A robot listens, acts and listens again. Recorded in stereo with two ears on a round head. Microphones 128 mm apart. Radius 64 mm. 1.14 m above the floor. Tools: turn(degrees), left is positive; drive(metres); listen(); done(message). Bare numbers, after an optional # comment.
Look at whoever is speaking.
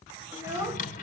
# The child speaking: about 20° right or 160° right.
turn(-20)
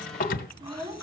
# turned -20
# The child speaking: about 25° right or 155° right.
turn(-25)
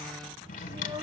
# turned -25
# The child speaking: about 35° right or 145° right.
turn(-35)
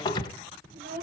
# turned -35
# So it is at 120° right.
turn(-120)
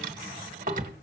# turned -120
listen()
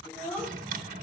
# The child speaking is now 10° left.
turn(10)
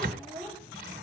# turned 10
done("Facing the child speaking.")